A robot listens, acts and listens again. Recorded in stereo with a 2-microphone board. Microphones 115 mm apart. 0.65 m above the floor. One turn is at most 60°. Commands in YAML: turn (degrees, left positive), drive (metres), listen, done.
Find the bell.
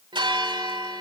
turn: -45
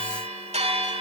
turn: -60
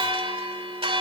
turn: -55
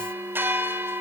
turn: -20
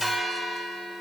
done: "Facing the bell, 1 to 2 m away."